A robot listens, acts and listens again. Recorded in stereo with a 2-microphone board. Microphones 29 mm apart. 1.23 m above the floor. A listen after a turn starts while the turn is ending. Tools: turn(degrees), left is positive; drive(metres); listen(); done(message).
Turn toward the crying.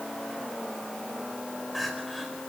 turn(degrees=30)
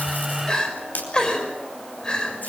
turn(degrees=150)
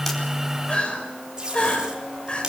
turn(degrees=35)
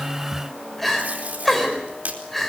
done("Facing the crying.")